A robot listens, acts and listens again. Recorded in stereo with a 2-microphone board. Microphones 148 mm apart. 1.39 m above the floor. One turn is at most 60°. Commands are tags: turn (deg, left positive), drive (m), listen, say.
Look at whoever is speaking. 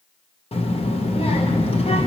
<turn deg="40"/>
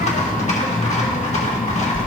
<turn deg="60"/>
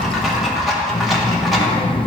<turn deg="40"/>
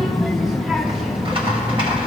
<say>Facing the child speaking.</say>